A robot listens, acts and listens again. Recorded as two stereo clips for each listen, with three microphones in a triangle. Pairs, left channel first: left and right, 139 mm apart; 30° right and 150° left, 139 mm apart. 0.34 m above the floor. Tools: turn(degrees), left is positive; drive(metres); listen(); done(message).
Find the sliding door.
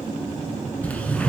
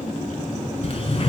turn(degrees=10)
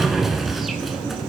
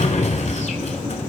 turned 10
done("Found it: a sliding door, straight ahead, under 1 m away.")